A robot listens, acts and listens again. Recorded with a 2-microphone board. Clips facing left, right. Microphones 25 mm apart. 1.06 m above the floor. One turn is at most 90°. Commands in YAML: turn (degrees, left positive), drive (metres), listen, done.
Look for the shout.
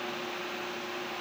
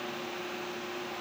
listen: true
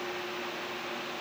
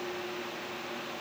listen: true
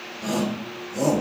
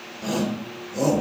turn: -20
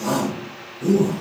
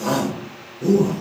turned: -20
turn: -90
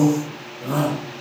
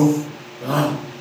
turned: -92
turn: -50
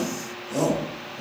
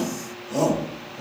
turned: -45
done: "Facing the shout, 2 to 4 m away."